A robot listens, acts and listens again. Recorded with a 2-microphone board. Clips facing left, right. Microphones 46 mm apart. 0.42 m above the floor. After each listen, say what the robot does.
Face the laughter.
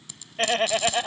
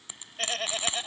Turn 35° left.
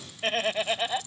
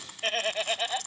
Found it: laughter, straight ahead.